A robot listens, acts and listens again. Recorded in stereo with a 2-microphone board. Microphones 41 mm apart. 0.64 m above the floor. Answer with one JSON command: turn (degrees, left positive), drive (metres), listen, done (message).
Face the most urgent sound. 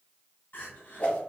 {"turn": 60}
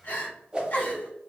{"turn": 55}
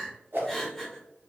{"done": "Facing the crying."}